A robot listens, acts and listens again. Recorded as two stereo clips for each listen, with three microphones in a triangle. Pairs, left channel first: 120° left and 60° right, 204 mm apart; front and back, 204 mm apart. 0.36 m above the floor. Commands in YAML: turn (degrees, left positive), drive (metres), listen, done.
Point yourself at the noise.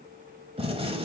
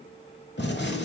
done: "Found it: a gunshot, straight ahead."